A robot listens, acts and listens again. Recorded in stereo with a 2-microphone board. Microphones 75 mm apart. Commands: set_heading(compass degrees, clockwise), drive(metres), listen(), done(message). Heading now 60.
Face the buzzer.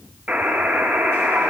set_heading(75)
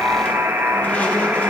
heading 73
set_heading(223)
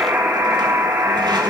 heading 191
set_heading(226)
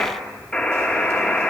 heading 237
set_heading(227)
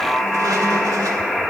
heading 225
done("Facing the buzzer.")